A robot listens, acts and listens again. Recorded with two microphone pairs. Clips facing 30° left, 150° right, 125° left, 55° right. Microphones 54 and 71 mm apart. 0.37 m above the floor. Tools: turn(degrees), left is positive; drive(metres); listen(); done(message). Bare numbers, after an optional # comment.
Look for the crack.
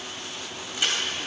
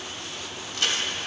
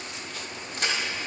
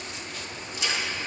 # The crack: 105° left.
turn(105)
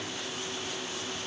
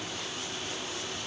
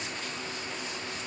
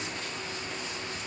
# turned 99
done("I heard a crack from this way, but can't make it out now.")